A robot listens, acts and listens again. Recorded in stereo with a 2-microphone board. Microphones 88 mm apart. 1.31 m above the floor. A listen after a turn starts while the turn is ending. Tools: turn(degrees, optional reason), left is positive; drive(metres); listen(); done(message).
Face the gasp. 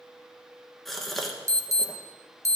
turn(degrees=30)
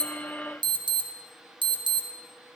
listen()
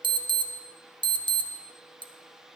done("I heard a gasp, but can't make it out now. It was about 30° right or 150° left.")